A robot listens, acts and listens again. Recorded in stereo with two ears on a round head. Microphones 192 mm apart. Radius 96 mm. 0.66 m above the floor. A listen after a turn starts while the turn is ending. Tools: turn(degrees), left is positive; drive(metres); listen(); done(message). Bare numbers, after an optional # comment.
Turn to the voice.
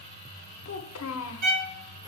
# The child speaking: about 70° left or 110° left.
turn(70)
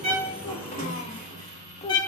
# So it is at 30° left.
turn(30)
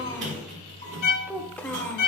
done("Found it: a child speaking, straight ahead, 1 to 2 m away.")